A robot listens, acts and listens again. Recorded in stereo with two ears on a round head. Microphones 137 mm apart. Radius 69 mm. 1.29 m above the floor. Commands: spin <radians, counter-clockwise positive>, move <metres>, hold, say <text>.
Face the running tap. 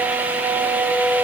hold
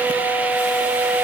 hold
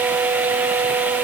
say I can't make out a running tap.